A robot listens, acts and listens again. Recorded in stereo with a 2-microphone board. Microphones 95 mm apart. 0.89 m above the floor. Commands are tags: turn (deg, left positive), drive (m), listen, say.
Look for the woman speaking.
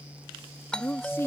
<turn deg="25"/>
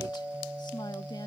<listen/>
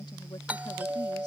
<listen/>
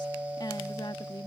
<turn deg="130"/>
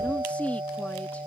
<turn deg="15"/>
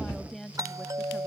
<say>Facing the woman speaking.</say>